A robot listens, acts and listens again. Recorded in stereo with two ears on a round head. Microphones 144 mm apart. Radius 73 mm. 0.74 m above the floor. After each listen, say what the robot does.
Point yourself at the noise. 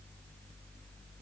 Keep listening.
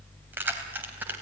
Turn 30° right.
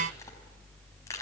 Turn 20° left.
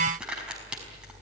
Found it: keys jangling, straight ahead.